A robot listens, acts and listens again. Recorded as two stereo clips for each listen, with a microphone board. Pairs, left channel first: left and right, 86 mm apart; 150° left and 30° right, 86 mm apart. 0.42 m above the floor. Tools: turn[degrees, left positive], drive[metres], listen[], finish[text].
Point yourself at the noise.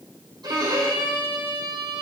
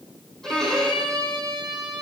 Thought: The violin: 125° right.
Action: turn[-125]
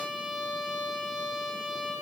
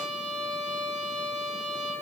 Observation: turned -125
Thought: The violin is now 10° right.
Action: turn[-10]
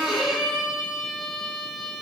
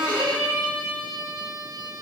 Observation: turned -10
Action: finish[Facing the violin.]